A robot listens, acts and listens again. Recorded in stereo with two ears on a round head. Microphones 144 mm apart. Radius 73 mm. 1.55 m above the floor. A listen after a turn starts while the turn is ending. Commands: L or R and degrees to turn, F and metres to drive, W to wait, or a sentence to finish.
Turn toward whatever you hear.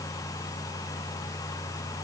W
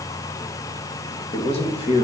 L45
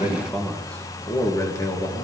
L25
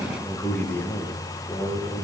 L15
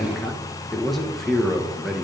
Facing the man speaking.